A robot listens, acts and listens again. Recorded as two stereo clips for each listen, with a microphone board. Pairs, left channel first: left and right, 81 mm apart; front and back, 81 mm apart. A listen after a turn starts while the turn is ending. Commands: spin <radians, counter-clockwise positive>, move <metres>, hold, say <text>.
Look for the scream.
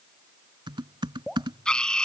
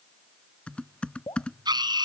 spin 2.97
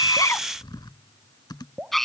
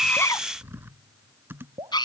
say Found it: a scream, straight ahead.